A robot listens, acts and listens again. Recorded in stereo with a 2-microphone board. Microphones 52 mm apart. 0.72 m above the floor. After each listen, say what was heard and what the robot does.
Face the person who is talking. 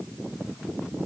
Keep listening.
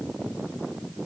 Keep listening.
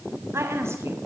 The woman speaking: about 55° right or 125° right. Turn 55° right.
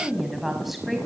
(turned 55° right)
Facing the woman speaking, over 4 m away.